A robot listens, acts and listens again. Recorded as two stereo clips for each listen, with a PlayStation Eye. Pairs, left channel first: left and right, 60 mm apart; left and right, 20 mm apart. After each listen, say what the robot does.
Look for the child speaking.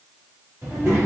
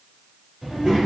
Turn 45° right.
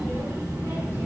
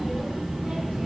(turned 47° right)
Turn 80° right.
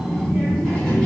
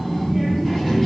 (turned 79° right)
Found it: a child speaking, straight ahead, 2 to 4 m away.